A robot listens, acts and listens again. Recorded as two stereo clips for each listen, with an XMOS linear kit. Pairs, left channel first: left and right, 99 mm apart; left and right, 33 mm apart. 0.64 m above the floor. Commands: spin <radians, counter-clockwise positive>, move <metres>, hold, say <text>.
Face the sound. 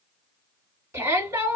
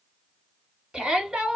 spin -0.52
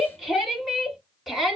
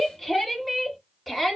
say Found it: a shout, straight ahead.